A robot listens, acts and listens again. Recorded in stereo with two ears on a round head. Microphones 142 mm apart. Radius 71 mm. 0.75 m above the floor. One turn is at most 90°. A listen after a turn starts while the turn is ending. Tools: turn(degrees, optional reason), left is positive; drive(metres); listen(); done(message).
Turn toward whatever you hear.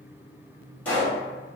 turn(degrees=30)
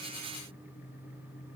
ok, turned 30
listen()
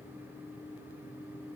done("I heard a pop, but can't make it out now. It was about 20° right or 140° left.")